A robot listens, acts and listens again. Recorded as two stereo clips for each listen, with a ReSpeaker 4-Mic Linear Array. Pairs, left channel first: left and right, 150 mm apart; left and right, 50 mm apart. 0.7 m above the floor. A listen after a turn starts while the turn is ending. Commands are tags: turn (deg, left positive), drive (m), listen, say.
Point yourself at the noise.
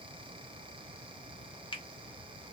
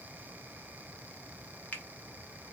<turn deg="35"/>
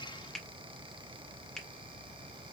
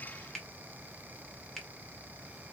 <say>Found it: a finger snap, straight ahead, under 1 m away.</say>